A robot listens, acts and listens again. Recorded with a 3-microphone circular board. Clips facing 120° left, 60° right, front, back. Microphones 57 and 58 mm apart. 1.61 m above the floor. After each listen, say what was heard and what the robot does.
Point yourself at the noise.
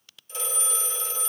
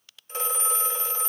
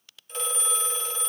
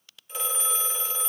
The phone ringing: 95° right. Turn 95° right.
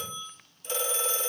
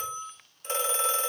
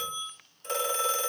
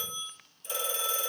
The phone ringing is now 20° right. Turn 20° right.
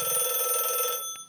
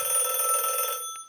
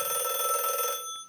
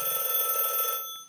Facing the phone ringing, 1 to 2 m away.